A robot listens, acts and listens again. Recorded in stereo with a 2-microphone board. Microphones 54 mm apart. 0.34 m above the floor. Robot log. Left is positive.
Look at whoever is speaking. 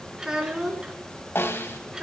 cmd yaw -30
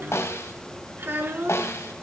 note: So it is at 140° right.
cmd yaw -140
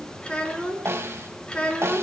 note: The child speaking is now 20° left.
cmd yaw +20
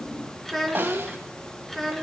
end: Facing the child speaking, 2 to 4 m away.